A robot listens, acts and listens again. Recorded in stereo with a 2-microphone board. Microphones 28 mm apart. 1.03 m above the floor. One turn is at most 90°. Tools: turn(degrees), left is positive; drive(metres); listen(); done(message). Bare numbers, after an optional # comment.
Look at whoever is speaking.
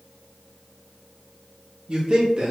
# The man speaking: about 40° right or 140° right.
turn(-40)
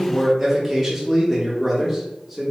done("Found it: a man speaking, straight ahead, under 1 m away.")